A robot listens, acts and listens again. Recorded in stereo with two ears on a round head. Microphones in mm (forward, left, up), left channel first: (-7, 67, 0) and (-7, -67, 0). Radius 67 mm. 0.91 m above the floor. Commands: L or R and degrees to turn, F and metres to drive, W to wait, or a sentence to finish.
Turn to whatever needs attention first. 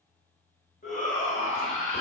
L50
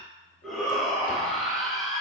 Facing the shout, 1 to 2 m away.